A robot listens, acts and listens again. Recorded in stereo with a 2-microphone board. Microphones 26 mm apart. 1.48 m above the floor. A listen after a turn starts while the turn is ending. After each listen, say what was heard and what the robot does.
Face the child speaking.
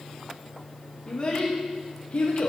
The child speaking: about 60° left or 120° left. Turn 60° left.
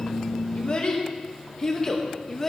So it is at 15° left. Turn 15° left.
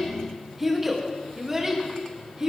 The child speaking is now 25° right. Turn 25° right.
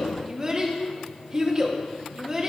The child speaking is now 30° right. Turn 30° right.
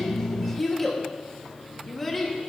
The child speaking is now 10° left. Turn 10° left.
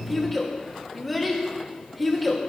Found it: a child speaking, straight ahead, 1 to 2 m away.